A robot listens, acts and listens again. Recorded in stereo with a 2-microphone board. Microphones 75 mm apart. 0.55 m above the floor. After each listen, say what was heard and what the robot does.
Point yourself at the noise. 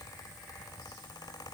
Keep listening.
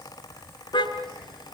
Turn 90° left.
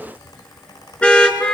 So it is at 15° left. Turn 15° left.
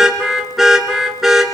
Found it: a car horn, straight ahead, 2 to 4 m away.